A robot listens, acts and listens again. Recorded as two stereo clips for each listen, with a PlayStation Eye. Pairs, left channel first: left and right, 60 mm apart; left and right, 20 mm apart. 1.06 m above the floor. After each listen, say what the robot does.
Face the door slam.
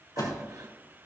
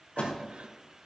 Turn 90° left.
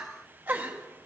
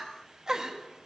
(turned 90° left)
Facing where the door slam came from. I can't hear it now.